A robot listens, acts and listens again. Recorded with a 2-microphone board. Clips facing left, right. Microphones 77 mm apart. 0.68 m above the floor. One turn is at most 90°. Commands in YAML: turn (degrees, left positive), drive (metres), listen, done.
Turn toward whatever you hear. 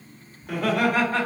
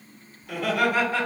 turn: 45
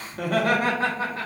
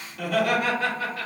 turn: 30
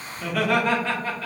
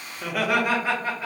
turn: -15
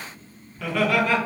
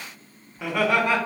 turn: -25
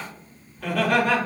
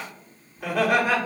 turn: -15
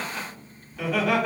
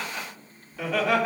done: "Facing the laughter."